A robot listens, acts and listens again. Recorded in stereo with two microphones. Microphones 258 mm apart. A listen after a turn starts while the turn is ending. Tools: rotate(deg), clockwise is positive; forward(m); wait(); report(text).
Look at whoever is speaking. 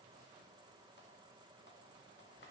wait()
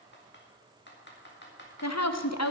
rotate(-90)
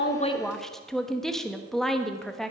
report("Found it: a woman speaking, straight ahead, 1 to 2 m away.")